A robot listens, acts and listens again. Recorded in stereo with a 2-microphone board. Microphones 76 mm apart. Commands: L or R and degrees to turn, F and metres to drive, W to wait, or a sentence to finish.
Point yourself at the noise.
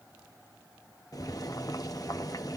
L50
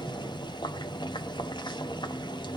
L80
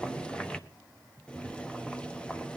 L15
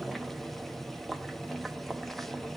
Found it: boiling, straight ahead, under 1 m away.